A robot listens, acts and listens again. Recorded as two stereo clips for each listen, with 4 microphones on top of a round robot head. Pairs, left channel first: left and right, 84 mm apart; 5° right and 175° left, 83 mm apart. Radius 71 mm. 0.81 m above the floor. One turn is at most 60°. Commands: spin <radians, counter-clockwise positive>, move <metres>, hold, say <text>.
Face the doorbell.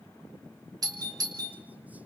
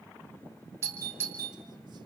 spin -1.05
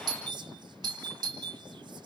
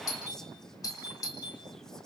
spin -0.87
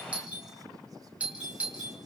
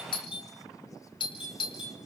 spin -0.26
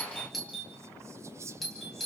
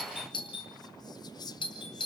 say Found it: a doorbell, straight ahead.